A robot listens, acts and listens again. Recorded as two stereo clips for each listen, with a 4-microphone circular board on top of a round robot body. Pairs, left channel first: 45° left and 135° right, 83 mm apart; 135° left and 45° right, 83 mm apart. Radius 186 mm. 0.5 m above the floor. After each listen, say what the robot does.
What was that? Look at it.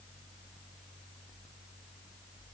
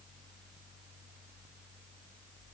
Keep listening.
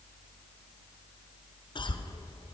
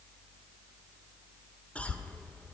Turn 60° left.
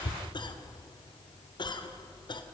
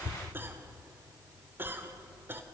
Turn 20° left.
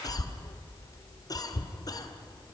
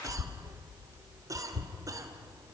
Facing the cough.